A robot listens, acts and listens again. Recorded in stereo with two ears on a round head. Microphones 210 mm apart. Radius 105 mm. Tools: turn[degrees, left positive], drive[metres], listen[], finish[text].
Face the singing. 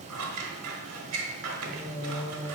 Thought: The singing: about 15° right or 165° right.
Action: turn[-15]
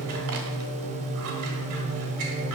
Thought: So it is at 125° right.
Action: turn[-125]
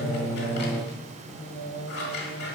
Thought: The singing is now 25° left.
Action: turn[25]
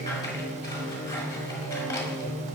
Action: finish[Found it: singing, straight ahead.]